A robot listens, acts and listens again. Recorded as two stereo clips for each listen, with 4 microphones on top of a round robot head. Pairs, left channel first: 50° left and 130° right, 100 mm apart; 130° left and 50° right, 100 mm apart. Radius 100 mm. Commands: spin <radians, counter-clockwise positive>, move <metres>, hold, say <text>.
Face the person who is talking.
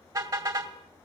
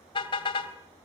hold
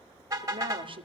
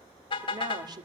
spin -1.66
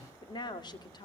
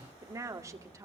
spin 0.17
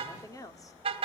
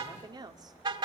say Facing the woman speaking, 2 to 4 m away.